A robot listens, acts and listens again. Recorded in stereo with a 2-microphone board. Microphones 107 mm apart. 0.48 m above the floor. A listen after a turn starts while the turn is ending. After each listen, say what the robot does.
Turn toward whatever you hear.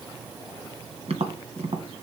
Turn 90° right.
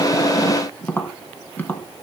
Turn 15° left.
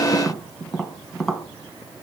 Facing the tapping.